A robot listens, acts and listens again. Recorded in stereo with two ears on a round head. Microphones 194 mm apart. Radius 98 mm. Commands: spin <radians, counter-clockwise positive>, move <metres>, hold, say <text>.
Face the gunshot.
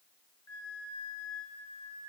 hold
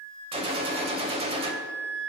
spin -0.44
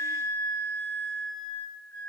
hold
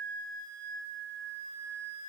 say I heard a gunshot, but can't make it out now. It was about straight ahead or 130° right.